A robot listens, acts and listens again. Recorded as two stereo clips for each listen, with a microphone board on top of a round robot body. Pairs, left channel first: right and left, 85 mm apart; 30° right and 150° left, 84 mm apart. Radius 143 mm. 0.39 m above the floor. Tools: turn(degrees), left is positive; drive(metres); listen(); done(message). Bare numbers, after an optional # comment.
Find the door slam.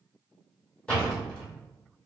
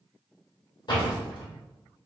# The door slam: 10° right.
turn(-10)
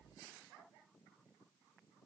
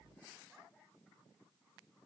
done("I heard a door slam from this way, but can't make it out now.")